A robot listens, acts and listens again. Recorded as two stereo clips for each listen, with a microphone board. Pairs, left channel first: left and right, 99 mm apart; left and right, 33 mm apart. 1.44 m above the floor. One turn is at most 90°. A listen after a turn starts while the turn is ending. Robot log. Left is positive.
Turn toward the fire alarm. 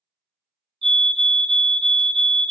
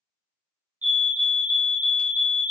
note: The fire alarm: about 55° right or 125° right.
cmd yaw -55
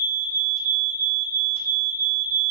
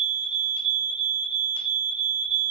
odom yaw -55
note: So it is at 30° right.
cmd yaw -30
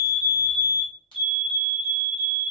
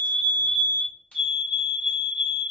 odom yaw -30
end: Facing the fire alarm.